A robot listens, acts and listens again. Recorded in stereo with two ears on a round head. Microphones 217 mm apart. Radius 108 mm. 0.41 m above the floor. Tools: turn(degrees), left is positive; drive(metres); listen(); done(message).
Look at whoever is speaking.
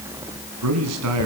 turn(degrees=-75)
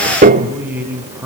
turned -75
done("Facing the man speaking.")